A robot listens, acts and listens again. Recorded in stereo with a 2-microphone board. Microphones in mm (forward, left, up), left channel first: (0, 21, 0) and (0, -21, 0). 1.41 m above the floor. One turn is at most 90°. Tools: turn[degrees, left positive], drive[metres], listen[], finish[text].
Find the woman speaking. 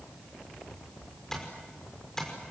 Action: listen[]
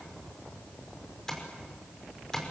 Action: listen[]
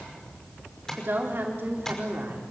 Thought: The woman speaking: about 50° right or 130° right.
Action: turn[-50]
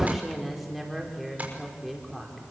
Action: finish[Facing the woman speaking.]